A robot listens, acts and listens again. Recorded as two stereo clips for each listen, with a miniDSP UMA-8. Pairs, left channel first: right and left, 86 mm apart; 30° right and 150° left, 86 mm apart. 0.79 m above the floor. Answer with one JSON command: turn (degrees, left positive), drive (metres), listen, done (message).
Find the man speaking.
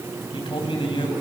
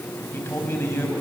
{"turn": -95}
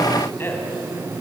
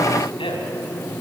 {"turn": -30}
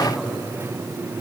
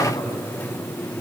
{"done": "Facing the man speaking."}